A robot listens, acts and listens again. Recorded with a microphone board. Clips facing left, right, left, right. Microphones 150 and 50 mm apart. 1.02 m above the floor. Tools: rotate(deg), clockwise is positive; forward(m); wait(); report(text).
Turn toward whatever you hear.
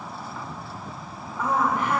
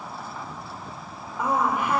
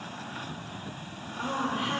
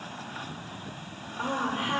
rotate(30)
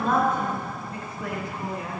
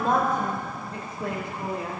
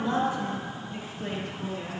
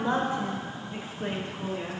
rotate(150)
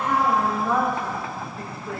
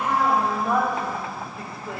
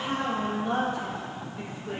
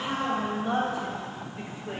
rotate(20)
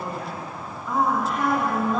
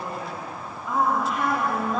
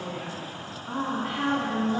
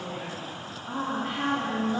report("Found it: a woman speaking, straight ahead, over 4 m away.")